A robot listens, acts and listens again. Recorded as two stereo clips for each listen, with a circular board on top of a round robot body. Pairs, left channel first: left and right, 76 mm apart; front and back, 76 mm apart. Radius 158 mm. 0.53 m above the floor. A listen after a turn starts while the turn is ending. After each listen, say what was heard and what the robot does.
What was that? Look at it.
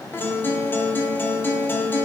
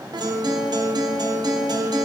The guitar: 155° left. Turn 155° left.
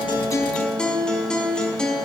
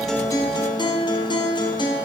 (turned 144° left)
The guitar is now 10° left. Turn 10° left.
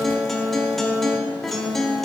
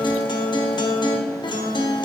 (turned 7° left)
Facing the guitar, 1 to 2 m away.